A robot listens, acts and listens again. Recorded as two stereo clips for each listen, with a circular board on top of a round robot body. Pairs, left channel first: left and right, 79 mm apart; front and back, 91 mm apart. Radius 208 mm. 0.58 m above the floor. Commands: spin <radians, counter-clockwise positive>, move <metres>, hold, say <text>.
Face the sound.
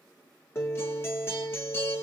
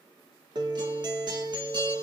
spin 2.53
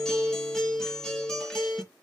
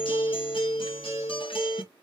say Facing the guitar, 1 to 2 m away.